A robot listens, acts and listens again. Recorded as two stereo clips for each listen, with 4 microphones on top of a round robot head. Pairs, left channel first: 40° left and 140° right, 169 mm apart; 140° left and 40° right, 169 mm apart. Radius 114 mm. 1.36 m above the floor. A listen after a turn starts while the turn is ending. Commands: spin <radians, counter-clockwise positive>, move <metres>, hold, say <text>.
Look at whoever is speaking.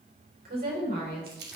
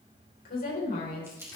spin 3.14
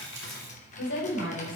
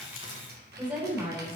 spin 0.70
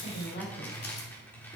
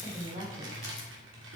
say Facing the woman speaking.